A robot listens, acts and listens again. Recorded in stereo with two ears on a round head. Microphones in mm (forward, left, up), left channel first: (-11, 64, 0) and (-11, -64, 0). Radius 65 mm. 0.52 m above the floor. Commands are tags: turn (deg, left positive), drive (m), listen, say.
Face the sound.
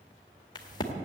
<turn deg="30"/>
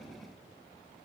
<listen/>
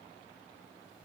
<say>I heard a crack, but can't make it out now. It was about straight ahead or 120° left.</say>